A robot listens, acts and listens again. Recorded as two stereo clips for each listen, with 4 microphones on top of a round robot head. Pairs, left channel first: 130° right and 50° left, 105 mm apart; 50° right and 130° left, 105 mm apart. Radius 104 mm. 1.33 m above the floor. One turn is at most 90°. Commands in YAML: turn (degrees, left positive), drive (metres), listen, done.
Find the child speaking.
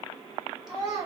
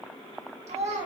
turn: 90
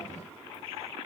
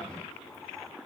turn: 50
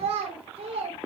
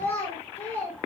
turn: 20
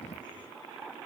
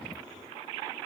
listen: true
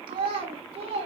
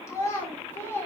turn: 20
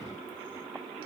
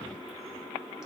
listen: true
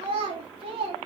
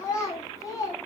turn: 10
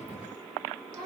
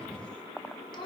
done: "Facing the child speaking, 1 to 2 m away."